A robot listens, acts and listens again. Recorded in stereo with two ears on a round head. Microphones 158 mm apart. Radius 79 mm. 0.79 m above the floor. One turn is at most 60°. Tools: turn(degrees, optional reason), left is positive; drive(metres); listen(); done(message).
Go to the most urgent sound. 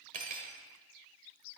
listen()
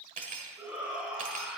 turn(degrees=-30)
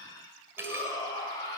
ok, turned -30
turn(degrees=25, reason="So it is at 25° left.")
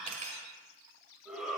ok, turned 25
drive(metres=1.0)
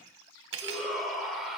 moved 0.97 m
drive(metres=1.0)
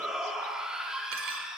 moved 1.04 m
drive(metres=1.0)
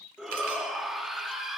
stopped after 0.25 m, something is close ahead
done("Arrived at the shout, straight ahead.")